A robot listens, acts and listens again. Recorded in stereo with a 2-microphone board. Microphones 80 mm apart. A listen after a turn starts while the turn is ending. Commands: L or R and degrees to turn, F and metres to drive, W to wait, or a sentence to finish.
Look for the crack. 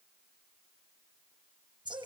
W
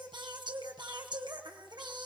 W
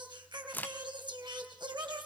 L25
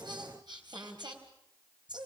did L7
W
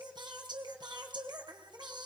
I heard a crack, but can't make it out now. It was about 15° left or 150° left.